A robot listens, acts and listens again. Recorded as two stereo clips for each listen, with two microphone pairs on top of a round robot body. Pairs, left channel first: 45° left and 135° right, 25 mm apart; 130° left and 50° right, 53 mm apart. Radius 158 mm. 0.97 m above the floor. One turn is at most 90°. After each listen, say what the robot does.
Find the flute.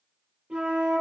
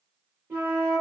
Turn 90° right.
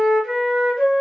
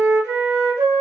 Turn 45° right.
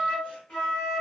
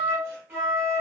Facing the flute, 1 to 2 m away.